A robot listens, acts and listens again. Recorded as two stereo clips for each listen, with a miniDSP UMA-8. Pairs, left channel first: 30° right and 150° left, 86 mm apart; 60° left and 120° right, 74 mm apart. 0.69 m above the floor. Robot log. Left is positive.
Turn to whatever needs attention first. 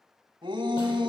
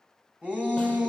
note: The shout: 170° left.
cmd yaw +170
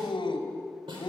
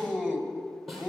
note: The shout is now 20° right.
cmd yaw -20
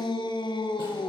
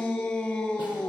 end: Facing the shout, 2 to 4 m away.